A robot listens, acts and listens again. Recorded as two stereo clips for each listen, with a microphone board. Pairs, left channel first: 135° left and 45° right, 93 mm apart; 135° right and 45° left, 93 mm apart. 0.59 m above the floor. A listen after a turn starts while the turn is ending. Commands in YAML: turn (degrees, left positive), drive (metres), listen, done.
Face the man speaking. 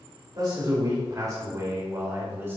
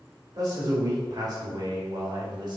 turn: 20
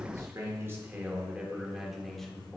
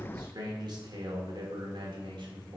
turn: 60
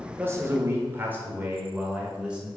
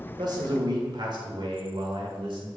turn: 35
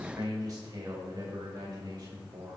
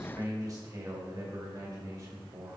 done: "Found it: a man speaking, straight ahead, 1 to 2 m away."